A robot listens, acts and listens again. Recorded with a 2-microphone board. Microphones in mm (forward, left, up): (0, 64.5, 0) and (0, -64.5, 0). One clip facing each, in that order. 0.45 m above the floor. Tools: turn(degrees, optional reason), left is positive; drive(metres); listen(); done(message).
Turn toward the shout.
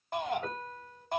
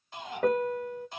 turn(degrees=60, reason="The shout: about 60° left or 120° left.")
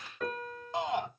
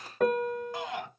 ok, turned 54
turn(degrees=25, reason="So it is at 25° left.")
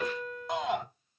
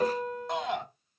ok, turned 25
done("Facing the shout, 2 to 4 m away.")